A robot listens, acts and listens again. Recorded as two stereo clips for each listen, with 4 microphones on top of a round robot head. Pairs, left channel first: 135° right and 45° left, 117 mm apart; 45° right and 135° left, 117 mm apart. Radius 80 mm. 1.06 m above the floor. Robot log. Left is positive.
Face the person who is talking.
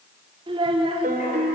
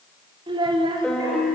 note: The child speaking: 90° left.
cmd yaw +90
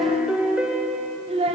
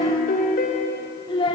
end: Found it: a child speaking, straight ahead.